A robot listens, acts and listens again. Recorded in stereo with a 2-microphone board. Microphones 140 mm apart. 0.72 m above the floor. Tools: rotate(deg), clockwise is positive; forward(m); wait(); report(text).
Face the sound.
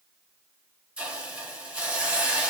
rotate(30)
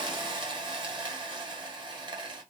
rotate(140)
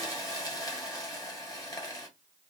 rotate(-35)
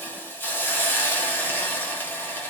rotate(-15)
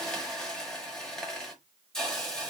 report("Found it: a hiss, straight ahead.")